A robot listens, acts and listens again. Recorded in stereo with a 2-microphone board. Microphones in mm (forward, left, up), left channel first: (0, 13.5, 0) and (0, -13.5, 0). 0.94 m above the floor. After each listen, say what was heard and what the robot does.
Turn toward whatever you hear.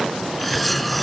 Turn 30° left.
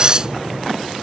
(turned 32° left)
So it is at 30° right. Turn 30° right.
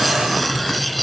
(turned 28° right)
Facing the cutlery clinking.